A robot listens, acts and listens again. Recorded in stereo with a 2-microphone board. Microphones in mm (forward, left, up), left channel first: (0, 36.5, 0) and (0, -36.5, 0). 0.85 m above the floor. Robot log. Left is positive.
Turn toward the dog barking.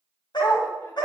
cmd yaw +90
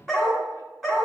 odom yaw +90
end: Facing the dog barking.